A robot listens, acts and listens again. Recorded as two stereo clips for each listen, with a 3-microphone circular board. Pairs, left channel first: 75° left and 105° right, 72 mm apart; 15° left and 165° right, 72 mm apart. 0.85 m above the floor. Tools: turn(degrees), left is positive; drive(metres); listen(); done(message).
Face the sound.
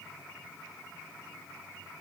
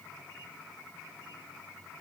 listen()
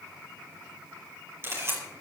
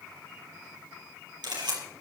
turn(degrees=-160)
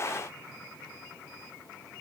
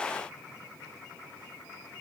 listen()
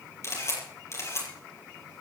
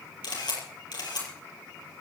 turn(degrees=25)
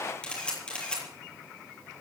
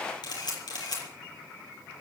done("Found it: a camera shutter, straight ahead, over 4 m away.")